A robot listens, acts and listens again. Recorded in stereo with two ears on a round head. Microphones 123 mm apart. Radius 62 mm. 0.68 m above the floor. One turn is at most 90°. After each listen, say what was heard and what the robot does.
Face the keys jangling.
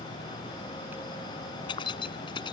The keys jangling: about 35° left or 145° left. Turn 35° left.
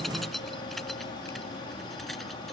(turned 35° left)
Facing the keys jangling.